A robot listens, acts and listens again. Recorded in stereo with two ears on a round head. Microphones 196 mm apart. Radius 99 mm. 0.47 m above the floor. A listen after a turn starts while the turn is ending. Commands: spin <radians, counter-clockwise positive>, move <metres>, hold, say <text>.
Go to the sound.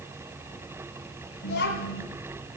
spin 0.87
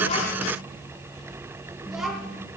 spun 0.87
move 1.0
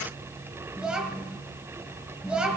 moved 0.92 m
move 1.0
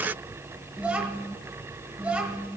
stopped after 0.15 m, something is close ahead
say I am next to the child speaking.